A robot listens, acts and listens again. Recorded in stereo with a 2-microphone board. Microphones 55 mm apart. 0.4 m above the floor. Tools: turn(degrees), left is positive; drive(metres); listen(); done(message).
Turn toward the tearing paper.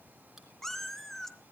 listen()
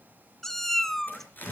turn(degrees=35)
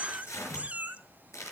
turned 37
turn(degrees=105)
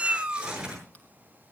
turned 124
turn(degrees=-20)
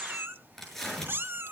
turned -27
done("Facing the tearing paper.")